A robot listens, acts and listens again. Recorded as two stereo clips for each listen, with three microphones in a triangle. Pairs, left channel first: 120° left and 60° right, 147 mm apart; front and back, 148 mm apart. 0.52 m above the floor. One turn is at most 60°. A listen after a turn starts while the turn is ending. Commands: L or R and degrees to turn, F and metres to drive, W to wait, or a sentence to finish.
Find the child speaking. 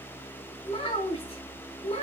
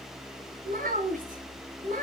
L60
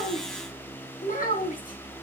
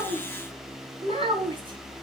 L60
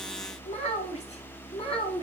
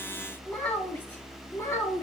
L60
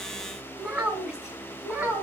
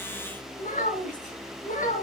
L25
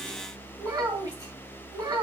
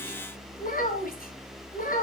Found it: a child speaking, straight ahead, 2 to 4 m away.